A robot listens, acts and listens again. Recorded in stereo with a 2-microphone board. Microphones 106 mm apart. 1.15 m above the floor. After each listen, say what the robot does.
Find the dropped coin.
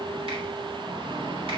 Keep listening.
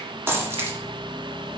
Turn 25° right.
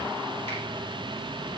Keep listening.
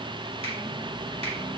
I heard a dropped coin, but can't make it out now. It was about straight ahead or 130° right.